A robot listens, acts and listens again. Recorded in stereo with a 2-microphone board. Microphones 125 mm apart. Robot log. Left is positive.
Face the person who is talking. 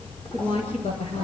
note: The woman speaking: about 50° left or 130° left.
cmd yaw +50
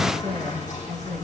end: Facing the woman speaking, over 4 m away.